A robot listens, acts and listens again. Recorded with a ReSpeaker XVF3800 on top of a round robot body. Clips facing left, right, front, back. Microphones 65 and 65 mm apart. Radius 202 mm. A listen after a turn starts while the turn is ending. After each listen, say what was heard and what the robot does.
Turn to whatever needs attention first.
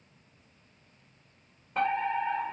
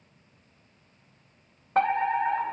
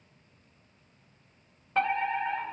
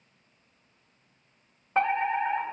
The fire alarm: 115° right. Turn 115° right.
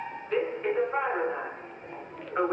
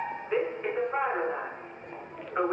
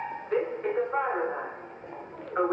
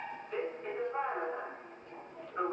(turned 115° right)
Found it: a fire alarm, straight ahead, 2 to 4 m away.